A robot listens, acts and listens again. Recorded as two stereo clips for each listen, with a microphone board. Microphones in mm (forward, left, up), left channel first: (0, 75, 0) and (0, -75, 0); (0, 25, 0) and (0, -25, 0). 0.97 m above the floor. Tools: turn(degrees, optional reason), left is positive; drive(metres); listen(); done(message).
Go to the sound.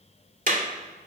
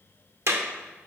turn(degrees=-65, reason="The clap: about 65° right or 115° right.")
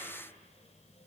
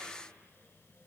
listen()
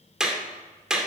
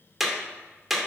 drive(metres=1.0)
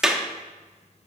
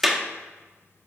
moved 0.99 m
drive(metres=1.0)
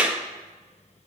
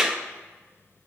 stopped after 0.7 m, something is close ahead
turn(degrees=-10, reason="The clap is now 10° right.")
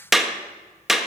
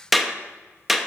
done("Arrived at the clap, straight ahead.")